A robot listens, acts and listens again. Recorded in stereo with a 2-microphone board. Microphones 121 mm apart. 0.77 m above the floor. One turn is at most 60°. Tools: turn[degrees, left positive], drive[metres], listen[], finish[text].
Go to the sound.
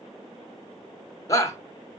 Thought: The shout: about 25° left or 155° left.
Action: turn[25]
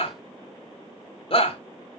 Thought: So it is at 125° left.
Action: turn[60]
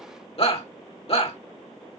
Thought: The shout is now 60° left.
Action: turn[60]
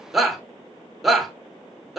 Action: drive[1.0]
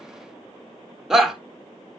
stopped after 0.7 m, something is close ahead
Action: finish[Arrived at the shout, straight ahead.]